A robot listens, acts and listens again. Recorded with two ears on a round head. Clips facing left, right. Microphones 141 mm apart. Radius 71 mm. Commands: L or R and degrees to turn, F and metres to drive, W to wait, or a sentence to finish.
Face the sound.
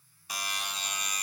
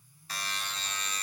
L30
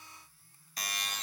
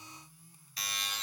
L135
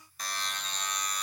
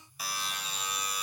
Facing the buzzer.